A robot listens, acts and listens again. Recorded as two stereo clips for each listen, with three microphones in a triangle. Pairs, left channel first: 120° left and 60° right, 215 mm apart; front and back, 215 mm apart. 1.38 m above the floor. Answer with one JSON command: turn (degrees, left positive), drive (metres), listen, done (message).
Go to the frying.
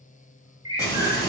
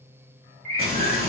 {"turn": -165}
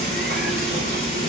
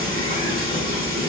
{"turn": -15}
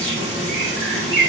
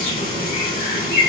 {"drive": 1.0}
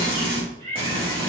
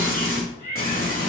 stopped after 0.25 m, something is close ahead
{"done": "Blocked. The frying is further on, straight ahead."}